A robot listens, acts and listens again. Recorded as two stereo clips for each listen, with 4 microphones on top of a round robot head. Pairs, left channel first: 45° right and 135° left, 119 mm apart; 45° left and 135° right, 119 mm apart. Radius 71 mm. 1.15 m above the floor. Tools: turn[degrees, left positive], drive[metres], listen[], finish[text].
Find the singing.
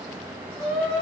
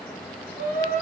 Thought: The singing: 105° right.
Action: turn[-105]
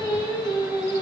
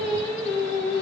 Thought: The singing is now 10° left.
Action: turn[10]
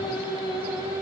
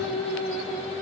Thought: The singing is now 15° left.
Action: turn[15]
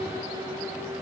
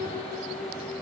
Thought: The singing is now 10° left.
Action: turn[10]
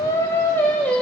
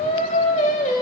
Thought: The singing is now 35° left.
Action: turn[35]
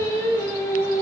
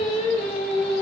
Thought: The singing is now 15° left.
Action: turn[15]
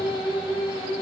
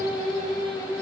Action: finish[Found it: singing, straight ahead.]